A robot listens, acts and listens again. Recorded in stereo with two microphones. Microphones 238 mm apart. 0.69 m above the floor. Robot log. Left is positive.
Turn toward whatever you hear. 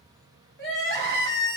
note: The crying: about 60° left or 120° left.
cmd yaw +60
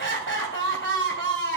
note: So it is at 60° left.
cmd yaw +60
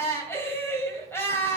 note: The crying is now 10° left.
cmd yaw +10
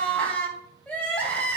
end: Facing the crying, 2 to 4 m away.